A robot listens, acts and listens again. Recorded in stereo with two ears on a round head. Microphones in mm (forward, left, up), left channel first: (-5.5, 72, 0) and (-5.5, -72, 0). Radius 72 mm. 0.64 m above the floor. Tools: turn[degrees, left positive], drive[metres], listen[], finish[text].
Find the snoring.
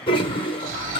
Thought: The snoring: about 45° right or 135° right.
Action: turn[-45]
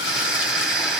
Action: finish[Found it: snoring, straight ahead.]